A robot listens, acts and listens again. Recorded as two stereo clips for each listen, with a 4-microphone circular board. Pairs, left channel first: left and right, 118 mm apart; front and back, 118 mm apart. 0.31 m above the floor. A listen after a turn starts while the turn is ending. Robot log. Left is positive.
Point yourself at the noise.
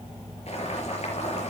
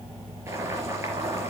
note: The boiling: 115° left.
cmd yaw +115
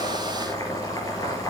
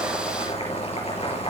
note: The boiling is now 30° left.
cmd yaw +30
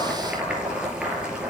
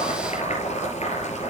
note: The boiling is now 10° right.
cmd yaw -10
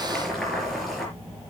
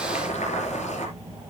end: Found it: boiling, straight ahead, over 4 m away.